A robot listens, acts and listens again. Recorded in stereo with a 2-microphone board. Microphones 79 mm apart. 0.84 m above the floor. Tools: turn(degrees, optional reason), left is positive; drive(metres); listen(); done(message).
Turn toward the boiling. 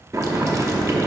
turn(degrees=-40, reason="The boiling: about 40° right or 140° right.")
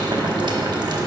turn(degrees=-100, reason="So it is at 100° right.")
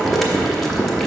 done("Found it: boiling, straight ahead.")